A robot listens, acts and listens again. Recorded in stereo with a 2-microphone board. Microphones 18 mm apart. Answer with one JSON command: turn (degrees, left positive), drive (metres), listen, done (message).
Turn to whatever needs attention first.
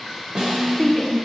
{"turn": 25}
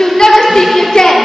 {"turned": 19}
{"turn": 140}
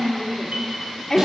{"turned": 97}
{"turn": 40}
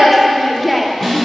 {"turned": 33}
{"turn": 10}
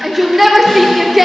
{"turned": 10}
{"done": "Facing the shout."}